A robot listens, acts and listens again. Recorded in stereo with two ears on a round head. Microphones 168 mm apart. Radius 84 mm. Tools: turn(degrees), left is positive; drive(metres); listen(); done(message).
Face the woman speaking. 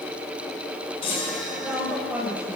turn(degrees=-30)
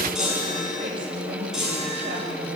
listen()
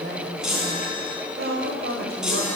turn(degrees=-120)
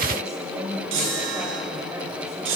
turn(degrees=-20)
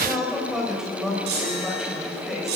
done("Facing the woman speaking.")